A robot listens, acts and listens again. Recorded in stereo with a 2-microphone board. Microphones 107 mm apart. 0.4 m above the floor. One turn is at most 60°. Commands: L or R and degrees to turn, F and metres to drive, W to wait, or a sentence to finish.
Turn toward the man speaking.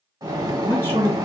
L20
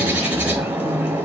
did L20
W
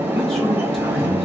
Found it: a man speaking, straight ahead, 2 to 4 m away.